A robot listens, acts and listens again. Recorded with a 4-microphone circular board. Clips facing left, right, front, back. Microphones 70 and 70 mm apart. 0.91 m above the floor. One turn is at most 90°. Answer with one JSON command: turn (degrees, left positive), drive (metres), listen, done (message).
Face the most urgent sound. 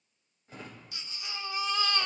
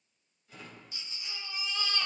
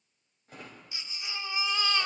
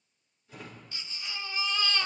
{"turn": 75}
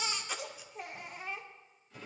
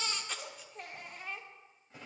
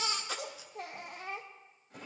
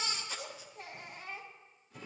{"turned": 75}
{"turn": 10}
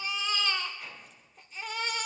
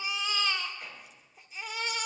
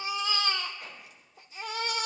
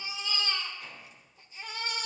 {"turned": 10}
{"done": "Facing the baby crying."}